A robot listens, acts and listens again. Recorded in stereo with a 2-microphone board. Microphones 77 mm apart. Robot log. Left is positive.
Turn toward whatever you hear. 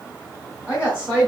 note: The woman speaking: about 20° right or 160° right.
cmd yaw -20
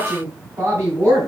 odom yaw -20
note: The woman speaking: about 35° right or 145° right.
cmd yaw -35
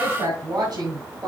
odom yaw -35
note: So it is at 120° right.
cmd yaw -120
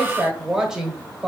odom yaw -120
note: The woman speaking is now 10° right.
cmd yaw -10
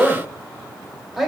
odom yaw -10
end: Found it: a woman speaking, straight ahead.